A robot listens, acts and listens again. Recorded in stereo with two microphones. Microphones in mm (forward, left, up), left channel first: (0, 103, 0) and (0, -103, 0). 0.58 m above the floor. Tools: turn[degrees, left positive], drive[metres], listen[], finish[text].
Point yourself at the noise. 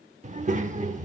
Thought: The child speaking: about 35° right or 145° right.
Action: turn[-35]
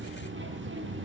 Thought: So it is at 110° right.
Action: turn[-110]
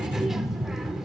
Action: finish[Facing the child speaking, under 1 m away.]